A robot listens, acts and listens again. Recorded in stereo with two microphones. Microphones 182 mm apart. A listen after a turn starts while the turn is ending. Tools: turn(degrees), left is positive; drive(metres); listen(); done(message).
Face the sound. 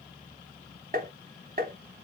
turn(degrees=-55)
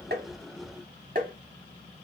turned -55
turn(degrees=-55)
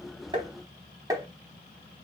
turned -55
turn(degrees=-20)
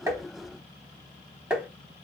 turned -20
done("Facing the tapping.")